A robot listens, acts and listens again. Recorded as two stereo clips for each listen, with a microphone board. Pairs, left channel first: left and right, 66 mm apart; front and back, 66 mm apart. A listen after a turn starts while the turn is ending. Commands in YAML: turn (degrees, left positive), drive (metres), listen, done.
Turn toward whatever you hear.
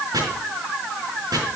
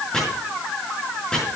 turn: -80
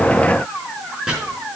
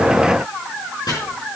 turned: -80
turn: -10
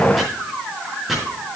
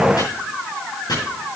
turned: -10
done: "Facing the chopping, over 4 m away."